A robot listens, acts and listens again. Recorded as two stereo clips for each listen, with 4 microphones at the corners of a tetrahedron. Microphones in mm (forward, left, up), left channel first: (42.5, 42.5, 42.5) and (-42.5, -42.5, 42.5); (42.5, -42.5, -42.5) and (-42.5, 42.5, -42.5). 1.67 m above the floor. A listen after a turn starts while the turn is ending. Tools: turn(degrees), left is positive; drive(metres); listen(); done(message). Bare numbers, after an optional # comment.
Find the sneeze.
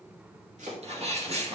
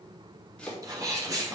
# The sneeze: 165° right.
turn(-165)
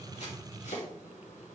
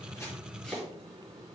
done("Facing where the sneeze came from. I can't hear it now.")